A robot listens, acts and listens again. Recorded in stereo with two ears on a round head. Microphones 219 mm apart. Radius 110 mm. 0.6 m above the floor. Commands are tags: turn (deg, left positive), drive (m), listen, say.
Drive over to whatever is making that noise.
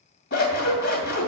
<turn deg="45"/>
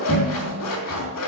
<turn deg="85"/>
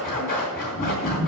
<turn deg="35"/>
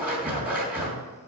<drive m="1.0"/>
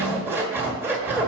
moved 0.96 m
<turn deg="-10"/>
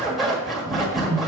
<drive m="1.0"/>
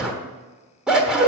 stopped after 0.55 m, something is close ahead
<say>Arrived at the scissors, straight ahead.</say>